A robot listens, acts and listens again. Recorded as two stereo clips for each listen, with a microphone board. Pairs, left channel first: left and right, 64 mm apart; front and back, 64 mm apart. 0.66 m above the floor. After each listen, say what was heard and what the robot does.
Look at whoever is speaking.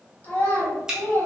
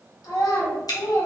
The child speaking: 30° left. Turn 30° left.
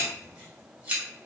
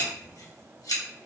Keep listening.
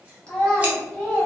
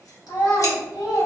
The child speaking is now 20° left. Turn 20° left.
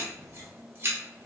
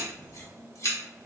Keep listening.
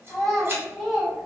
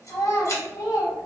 Found it: a child speaking, straight ahead, 1 to 2 m away.